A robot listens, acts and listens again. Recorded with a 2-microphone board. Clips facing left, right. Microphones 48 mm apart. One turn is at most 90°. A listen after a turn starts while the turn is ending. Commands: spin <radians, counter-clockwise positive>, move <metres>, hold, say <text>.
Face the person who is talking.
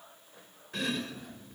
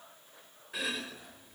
hold
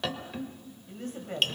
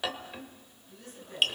spin 0.96
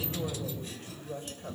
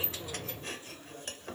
spin 1.13
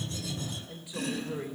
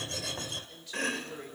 spin 0.26
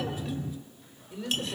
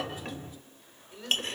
say Facing the woman speaking.